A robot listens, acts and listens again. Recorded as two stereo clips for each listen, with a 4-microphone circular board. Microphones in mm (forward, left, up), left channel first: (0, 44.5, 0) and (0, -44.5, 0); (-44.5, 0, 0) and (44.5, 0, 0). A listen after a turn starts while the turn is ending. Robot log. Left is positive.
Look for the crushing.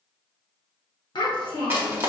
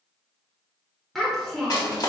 note: The crushing: 150° right.
cmd yaw -150
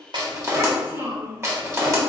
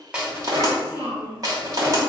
note: The crushing is now 35° right.
cmd yaw -35
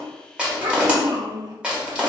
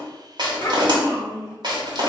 note: The crushing is now 10° right.
cmd yaw -10
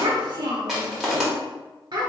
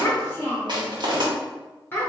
end: Facing the crushing.